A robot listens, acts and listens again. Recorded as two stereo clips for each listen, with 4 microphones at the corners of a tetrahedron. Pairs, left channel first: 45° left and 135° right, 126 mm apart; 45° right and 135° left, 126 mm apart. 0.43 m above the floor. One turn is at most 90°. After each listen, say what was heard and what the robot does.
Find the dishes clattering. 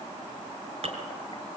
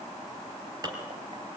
The dishes clattering: 165° right. Turn 90° right.
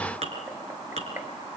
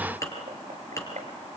The dishes clattering is now 110° right. Turn 90° right.
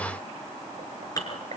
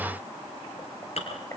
The dishes clattering is now 15° right. Turn 15° right.
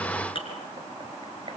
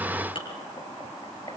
Found it: dishes clattering, straight ahead, over 4 m away.